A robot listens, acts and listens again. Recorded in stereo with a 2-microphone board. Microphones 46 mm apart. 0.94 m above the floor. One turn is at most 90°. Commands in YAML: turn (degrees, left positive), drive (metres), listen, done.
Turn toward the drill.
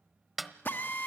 turn: 45
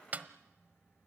listen: true
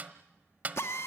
turn: 85
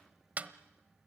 listen: true
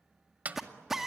done: "Found it: a drill, straight ahead."